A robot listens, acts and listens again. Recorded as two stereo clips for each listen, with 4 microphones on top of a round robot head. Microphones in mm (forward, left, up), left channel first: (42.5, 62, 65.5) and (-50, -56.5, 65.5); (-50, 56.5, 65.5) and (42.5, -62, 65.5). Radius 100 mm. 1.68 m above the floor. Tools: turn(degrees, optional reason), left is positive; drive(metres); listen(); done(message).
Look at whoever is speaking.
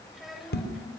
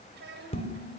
turn(degrees=-40, reason="The child speaking: 40° right.")
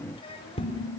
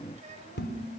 done("Facing the child speaking.")